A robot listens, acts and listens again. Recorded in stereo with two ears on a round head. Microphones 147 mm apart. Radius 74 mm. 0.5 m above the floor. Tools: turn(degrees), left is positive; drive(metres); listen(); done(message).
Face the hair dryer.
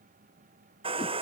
turn(degrees=-35)
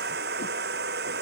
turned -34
turn(degrees=-110)
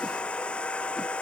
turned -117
done("Facing the hair dryer.")